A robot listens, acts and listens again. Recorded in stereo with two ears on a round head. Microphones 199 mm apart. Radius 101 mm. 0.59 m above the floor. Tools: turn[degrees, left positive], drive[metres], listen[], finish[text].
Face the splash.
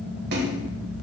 Thought: The splash: about 45° right or 135° right.
Action: turn[-45]
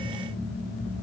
Action: listen[]
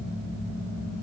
Action: finish[I heard a splash, but can't make it out now. It was about straight ahead or 90° right.]